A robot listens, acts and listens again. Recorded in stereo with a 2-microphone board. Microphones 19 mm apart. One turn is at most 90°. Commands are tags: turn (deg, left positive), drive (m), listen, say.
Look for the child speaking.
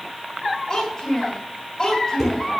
<turn deg="20"/>
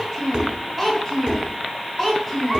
<say>Facing the child speaking.</say>